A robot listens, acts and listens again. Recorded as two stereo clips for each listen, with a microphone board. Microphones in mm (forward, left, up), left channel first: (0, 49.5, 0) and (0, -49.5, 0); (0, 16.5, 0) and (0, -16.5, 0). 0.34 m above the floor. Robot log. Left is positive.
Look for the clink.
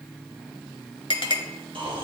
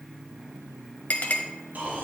note: The clink: about 55° left or 125° left.
cmd yaw +55
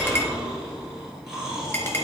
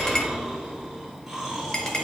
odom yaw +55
cmd idle
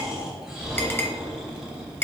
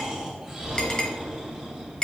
note: So it is at 25° left.
cmd yaw +25
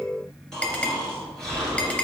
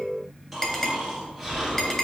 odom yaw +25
note: The clink is now 15° left.
cmd yaw +15
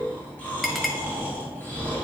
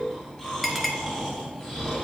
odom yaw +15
end: Found it: a clink, straight ahead, 1 to 2 m away.